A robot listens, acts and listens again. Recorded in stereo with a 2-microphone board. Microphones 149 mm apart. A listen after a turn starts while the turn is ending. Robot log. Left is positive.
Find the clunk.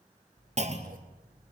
note: The clunk: about 50° right or 130° right.
cmd yaw -50
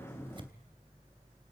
cmd idle
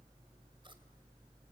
end: I heard a clunk, but can't make it out now. It was about straight ahead or 80° right.